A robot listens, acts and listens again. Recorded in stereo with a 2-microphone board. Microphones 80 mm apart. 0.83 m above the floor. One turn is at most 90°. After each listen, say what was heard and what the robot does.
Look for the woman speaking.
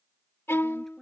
Turn 30° left.
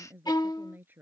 So it is at 25° right. Turn 25° right.
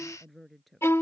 Found it: a woman speaking, straight ahead.